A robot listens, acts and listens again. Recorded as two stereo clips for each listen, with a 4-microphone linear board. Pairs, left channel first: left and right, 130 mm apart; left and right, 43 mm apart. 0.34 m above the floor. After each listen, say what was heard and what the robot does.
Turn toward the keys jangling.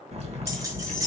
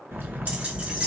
The keys jangling: about 25° right or 155° right. Turn 25° right.
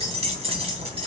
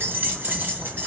So it is at 130° right. Turn 130° right.
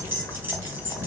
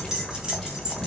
The keys jangling is now 15° right. Turn 15° right.
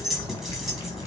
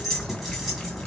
Facing the keys jangling.